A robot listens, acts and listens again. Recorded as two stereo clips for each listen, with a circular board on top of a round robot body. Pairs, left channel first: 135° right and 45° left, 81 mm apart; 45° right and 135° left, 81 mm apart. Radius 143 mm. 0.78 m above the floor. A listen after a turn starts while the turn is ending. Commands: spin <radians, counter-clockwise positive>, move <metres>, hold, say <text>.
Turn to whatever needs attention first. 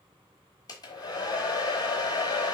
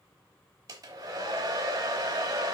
hold
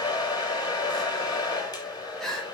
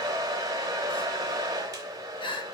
spin -0.87
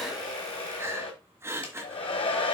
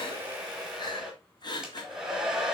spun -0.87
spin -0.26
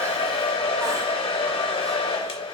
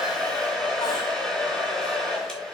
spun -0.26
hold
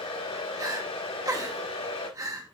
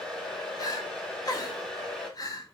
say Facing the crying.